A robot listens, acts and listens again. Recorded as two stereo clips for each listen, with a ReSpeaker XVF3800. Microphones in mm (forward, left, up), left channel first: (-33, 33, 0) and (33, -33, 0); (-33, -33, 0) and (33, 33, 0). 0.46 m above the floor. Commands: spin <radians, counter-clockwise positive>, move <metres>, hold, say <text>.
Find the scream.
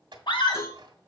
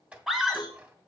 spin 2.27
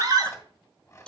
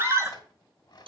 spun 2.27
say Facing the scream.